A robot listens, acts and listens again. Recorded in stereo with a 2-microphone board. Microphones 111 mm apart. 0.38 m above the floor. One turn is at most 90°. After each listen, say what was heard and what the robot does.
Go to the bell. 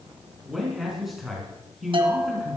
The bell: about 55° right or 125° right. Turn 55° right.
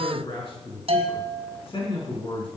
So it is at 65° right. Turn 65° right.
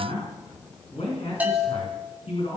The bell is now 15° right. Turn 15° right.
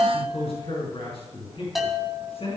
Drive 1.0 m forward.
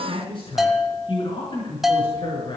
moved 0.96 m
Drive 1.0 m forward.
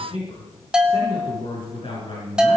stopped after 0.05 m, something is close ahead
The bell is now 10° right. Turn 10° right.
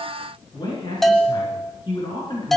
Arrived at the bell, straight ahead.